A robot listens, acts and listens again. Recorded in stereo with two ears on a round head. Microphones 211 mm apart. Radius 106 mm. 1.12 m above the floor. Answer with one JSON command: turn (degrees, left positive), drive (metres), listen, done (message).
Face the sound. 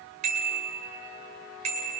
{"turn": -35}
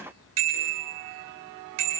{"turn": -110}
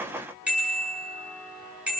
{"done": "Found it: a bicycle bell, straight ahead, over 4 m away."}